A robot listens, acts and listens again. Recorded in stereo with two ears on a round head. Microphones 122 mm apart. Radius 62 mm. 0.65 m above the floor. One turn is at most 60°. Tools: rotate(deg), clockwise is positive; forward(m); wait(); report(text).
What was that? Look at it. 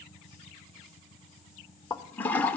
rotate(-30)
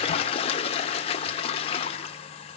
rotate(-60)
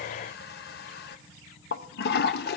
rotate(-60)
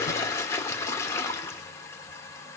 rotate(-20)
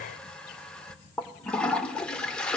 report("Found it: a toilet flushing, straight ahead, under 1 m away.")